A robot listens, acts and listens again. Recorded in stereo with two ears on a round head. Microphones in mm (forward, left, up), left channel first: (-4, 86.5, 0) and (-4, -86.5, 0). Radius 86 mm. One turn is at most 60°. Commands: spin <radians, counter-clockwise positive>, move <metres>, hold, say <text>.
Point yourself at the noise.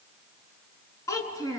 spin 0.35
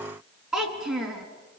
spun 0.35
say Facing the child speaking, 2 to 4 m away.